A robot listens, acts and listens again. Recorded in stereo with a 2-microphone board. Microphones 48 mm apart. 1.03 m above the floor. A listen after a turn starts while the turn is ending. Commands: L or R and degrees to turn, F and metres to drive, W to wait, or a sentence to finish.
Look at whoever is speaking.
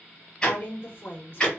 L40
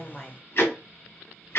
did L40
W
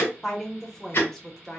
Found it: a woman speaking, straight ahead.